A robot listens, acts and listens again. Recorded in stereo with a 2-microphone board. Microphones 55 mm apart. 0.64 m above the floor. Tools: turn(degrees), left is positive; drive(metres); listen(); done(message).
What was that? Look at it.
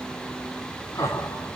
turn(degrees=75)
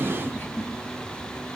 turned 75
turn(degrees=40)
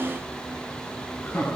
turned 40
turn(degrees=20)
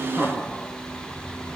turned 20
done("Facing the laughter, over 4 m away.")